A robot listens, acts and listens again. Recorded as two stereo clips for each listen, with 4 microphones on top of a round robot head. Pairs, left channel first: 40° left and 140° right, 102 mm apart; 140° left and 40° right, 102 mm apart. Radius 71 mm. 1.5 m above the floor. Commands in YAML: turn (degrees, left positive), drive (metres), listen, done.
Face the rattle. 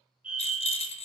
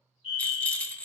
turn: 60
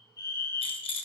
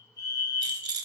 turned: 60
turn: 10
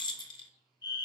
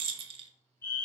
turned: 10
done: "Facing the rattle, under 1 m away."